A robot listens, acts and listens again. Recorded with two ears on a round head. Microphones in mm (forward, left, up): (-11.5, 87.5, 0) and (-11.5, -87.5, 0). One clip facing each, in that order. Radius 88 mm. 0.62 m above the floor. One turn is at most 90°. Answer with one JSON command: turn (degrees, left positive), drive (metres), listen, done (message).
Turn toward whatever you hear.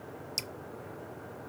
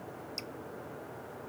{"turn": 65}
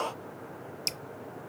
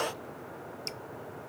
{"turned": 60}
{"turn": 45}
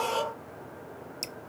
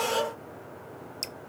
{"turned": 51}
{"done": "Found it: dripping, straight ahead."}